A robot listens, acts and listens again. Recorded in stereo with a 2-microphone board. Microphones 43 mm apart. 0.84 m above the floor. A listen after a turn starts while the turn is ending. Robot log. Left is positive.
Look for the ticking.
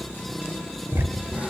cmd yaw -90
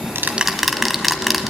end: Facing the ticking, 2 to 4 m away.